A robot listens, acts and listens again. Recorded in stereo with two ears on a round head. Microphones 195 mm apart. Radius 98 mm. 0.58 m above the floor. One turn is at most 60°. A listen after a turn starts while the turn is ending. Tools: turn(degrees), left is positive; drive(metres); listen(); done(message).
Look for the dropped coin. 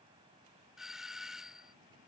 listen()
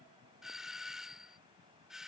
listen()
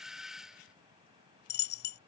turn(degrees=50)
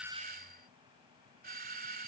listen()
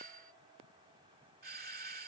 done("I heard a dropped coin, but can't make it out now. It was about straight ahead or 80° left.")